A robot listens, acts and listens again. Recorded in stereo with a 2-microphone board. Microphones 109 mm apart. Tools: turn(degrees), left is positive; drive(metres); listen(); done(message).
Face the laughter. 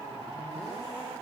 listen()
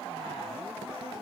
listen()
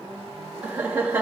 turn(degrees=-20)
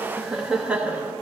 turn(degrees=-30)
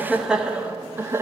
turn(degrees=-25)
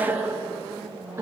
turn(degrees=-20)
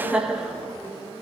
turn(degrees=-30)
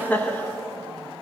turn(degrees=15)
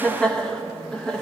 done("Facing the laughter.")